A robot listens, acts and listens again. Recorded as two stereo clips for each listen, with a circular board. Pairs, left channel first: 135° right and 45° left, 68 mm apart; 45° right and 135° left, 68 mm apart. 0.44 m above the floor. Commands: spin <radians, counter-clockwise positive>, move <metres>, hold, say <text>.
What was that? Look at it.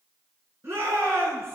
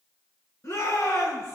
say Facing the shout, over 4 m away.